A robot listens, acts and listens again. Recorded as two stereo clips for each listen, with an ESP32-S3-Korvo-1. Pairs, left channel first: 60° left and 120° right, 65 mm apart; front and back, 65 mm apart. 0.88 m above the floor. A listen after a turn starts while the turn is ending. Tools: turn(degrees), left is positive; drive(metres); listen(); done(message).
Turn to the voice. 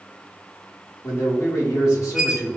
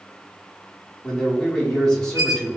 turn(degrees=75)
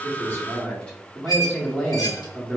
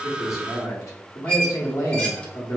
turn(degrees=-10)
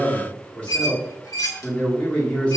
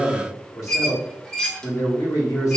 done("Found it: a man speaking, straight ahead.")